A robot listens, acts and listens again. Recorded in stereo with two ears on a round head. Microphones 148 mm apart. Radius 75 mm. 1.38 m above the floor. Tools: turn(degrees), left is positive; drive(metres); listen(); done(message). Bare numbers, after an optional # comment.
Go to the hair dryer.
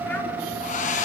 # The hair dryer: about 50° left or 130° left.
turn(50)
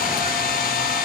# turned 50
# So it is at 70° left.
turn(70)
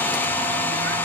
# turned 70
# The hair dryer is now 15° left.
turn(15)
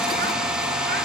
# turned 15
drive(1.0)
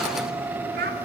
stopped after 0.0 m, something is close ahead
listen()
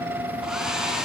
done("Something is in my way. I am facing the hair dryer but have not reached it.")